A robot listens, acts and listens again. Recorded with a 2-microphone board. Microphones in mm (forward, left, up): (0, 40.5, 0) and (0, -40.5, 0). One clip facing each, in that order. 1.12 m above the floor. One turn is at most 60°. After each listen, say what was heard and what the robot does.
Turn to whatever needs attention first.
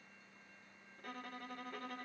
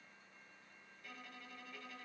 Keep listening.
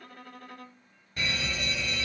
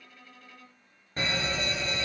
The fire alarm: about 35° right or 145° right. Turn 35° right.
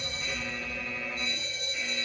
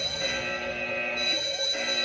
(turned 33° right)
So it is at 105° right. Turn 60° right.
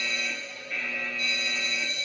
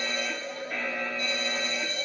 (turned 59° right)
The fire alarm is now 45° right. Turn 45° right.
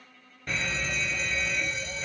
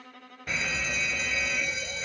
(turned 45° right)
Facing the fire alarm.